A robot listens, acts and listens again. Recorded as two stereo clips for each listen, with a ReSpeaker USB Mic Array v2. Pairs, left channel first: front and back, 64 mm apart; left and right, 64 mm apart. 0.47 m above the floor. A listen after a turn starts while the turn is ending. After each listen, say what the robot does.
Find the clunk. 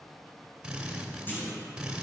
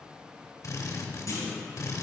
Turn 55° left.
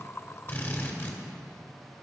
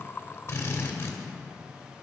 I heard a clunk from this way, but can't make it out now.